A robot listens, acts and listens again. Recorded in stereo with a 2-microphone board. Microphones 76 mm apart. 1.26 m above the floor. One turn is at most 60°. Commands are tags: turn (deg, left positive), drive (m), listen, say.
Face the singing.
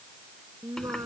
<turn deg="-50"/>
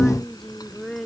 <say>Facing the singing.</say>